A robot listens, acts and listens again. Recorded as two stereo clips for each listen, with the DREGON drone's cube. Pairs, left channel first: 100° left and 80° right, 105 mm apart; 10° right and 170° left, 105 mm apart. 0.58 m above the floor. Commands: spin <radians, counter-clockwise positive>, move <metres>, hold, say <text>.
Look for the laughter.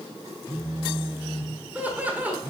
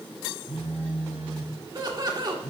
spin -2.62
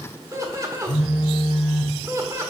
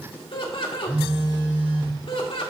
spin -0.52
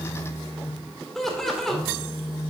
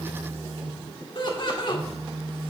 spin 0.26
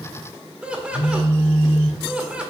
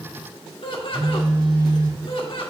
say Found it: laughter, straight ahead.